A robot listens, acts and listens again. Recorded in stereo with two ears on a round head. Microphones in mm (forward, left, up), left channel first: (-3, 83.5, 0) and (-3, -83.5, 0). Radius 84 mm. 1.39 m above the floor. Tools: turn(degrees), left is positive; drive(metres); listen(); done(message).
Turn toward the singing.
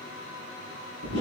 listen()
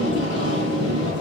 listen()
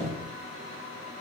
done("I can't make out singing, only tape being pulled.")